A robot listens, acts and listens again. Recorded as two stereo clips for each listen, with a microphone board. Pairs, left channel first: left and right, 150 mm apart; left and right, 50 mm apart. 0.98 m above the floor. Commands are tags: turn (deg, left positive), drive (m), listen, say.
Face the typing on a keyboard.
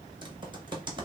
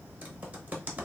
<turn deg="-30"/>
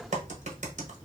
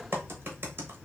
<turn deg="-110"/>
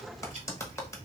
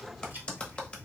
<turn deg="25"/>
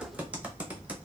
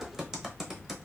<turn deg="-10"/>
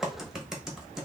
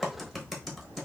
<say>Facing the typing on a keyboard, 1 to 2 m away.</say>